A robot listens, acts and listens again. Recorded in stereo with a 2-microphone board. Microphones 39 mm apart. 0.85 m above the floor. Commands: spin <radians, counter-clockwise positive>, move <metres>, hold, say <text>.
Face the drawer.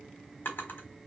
spin 1.13
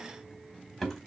say Facing the drawer, 1 to 2 m away.